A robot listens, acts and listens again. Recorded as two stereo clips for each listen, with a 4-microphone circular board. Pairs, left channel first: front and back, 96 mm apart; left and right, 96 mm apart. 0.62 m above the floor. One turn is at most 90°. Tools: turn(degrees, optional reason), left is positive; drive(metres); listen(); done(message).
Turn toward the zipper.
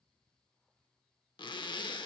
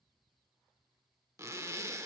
turn(degrees=-30, reason="The zipper: 30° right.")
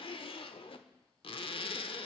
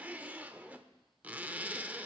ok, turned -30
turn(degrees=-15, reason="The zipper is now 15° right.")
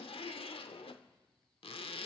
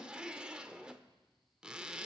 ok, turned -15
turn(degrees=-10, reason="The zipper is now 10° right.")
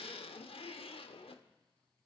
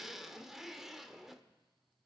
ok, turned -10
done("Facing the zipper.")